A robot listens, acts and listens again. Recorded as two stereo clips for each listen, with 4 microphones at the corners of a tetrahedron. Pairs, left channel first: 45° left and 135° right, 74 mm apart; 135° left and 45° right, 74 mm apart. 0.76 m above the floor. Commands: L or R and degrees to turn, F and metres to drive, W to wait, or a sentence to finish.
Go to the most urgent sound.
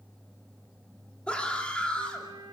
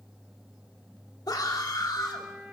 L120
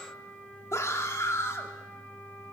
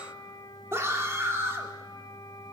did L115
F1.0
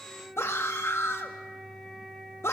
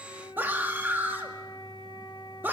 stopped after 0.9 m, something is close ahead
I am next to the scream.